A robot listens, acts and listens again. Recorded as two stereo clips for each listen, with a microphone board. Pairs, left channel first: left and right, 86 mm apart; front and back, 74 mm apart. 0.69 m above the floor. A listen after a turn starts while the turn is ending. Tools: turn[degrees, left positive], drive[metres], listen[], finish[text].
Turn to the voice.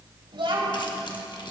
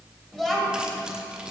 Thought: The child speaking: 85° right.
Action: turn[-85]
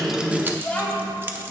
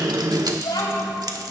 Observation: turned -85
Thought: The child speaking is now 20° left.
Action: turn[20]
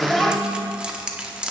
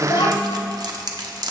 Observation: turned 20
Action: finish[Facing the child speaking, 2 to 4 m away.]